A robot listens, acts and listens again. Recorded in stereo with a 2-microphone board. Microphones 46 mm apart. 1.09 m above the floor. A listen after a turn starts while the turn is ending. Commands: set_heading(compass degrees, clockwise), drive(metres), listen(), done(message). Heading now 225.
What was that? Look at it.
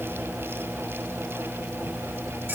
listen()
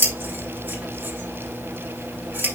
set_heading(275)
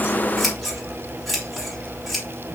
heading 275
done("Found it: scissors, straight ahead.")